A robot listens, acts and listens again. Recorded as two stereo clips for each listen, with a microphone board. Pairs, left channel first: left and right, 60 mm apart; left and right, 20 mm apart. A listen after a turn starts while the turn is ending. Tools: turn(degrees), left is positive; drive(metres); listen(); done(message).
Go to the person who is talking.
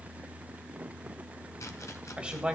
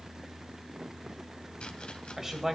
turn(degrees=-20)
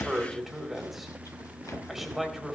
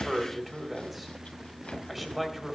drive(metres=1.0)
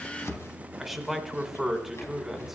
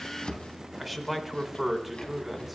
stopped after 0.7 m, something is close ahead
done("I am next to the man speaking.")